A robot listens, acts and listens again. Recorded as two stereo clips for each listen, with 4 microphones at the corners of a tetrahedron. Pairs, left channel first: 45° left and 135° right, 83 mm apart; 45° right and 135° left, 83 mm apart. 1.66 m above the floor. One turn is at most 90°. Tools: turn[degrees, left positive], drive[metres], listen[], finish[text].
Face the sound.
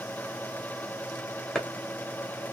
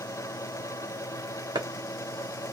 Thought: The chopping: 130° left.
Action: turn[90]
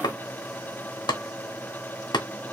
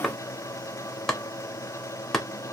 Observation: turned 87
Thought: The chopping is now 40° left.
Action: turn[40]
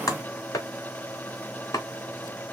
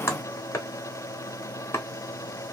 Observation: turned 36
Action: finish[Found it: chopping, straight ahead.]